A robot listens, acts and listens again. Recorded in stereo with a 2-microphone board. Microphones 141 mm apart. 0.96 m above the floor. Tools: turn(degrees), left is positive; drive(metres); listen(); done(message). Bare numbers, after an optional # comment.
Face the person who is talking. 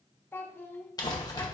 turn(30)
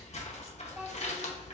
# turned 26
# So it is at 10° right.
turn(-10)
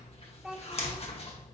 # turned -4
done("Facing the child speaking.")